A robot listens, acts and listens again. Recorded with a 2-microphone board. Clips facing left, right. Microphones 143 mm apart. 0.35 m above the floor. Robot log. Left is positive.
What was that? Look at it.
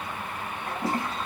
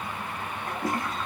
note: The toilet flushing: about 35° left or 145° left.
cmd yaw +35
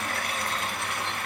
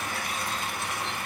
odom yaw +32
note: So it is at 115° left.
cmd yaw +115
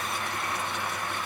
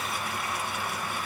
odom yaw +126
note: Nothing new. It was at 15° right.
cmd yaw -15
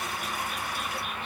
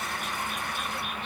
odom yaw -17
cmd idle
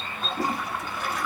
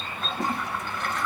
note: The toilet flushing is now 10° left.
cmd yaw +10
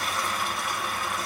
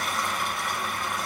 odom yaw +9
end: Facing the toilet flushing.